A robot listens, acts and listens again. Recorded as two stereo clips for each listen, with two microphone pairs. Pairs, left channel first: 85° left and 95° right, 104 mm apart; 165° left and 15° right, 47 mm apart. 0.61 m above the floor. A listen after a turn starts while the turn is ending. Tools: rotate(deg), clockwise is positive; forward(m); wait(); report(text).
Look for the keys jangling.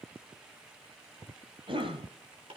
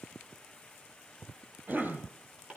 wait()
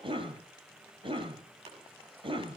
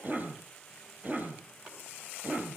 wait()
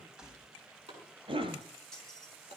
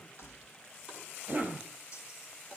rotate(-180)
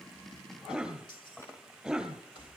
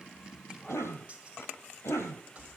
rotate(-50)
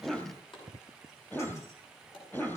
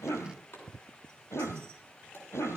wait()
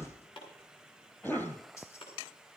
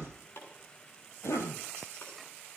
rotate(-25)
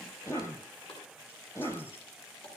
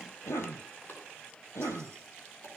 wait()
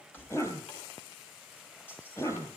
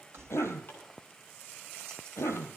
rotate(-15)
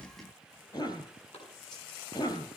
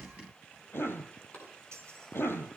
wait()
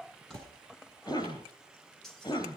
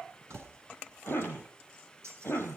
report("Found it: keys jangling, straight ahead, 2 to 4 m away.")